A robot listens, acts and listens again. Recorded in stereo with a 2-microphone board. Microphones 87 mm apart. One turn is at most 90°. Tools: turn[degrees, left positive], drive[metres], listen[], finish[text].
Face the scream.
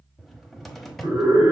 Thought: The scream: about 35° right or 145° right.
Action: turn[-35]
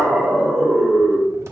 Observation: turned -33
Action: finish[Facing the scream.]